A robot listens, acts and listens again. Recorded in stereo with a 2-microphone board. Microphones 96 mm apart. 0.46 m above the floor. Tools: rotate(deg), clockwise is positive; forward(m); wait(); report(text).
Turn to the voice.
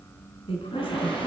rotate(-75)
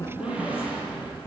rotate(-25)
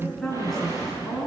report("Facing the woman speaking, over 4 m away.")